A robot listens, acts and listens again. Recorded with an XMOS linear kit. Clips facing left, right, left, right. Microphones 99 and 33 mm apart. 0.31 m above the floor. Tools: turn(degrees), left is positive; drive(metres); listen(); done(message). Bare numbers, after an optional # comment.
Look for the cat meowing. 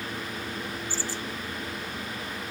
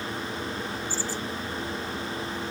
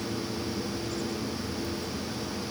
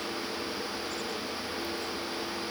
listen()
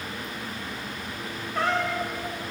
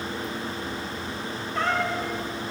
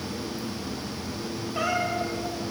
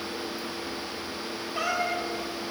turn(30)
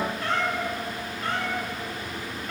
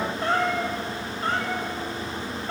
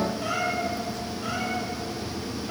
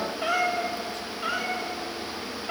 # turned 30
# So it is at 30° right.
turn(-30)
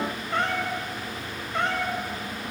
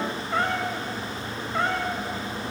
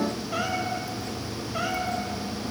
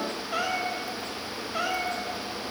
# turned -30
done("Found it: a cat meowing, straight ahead.")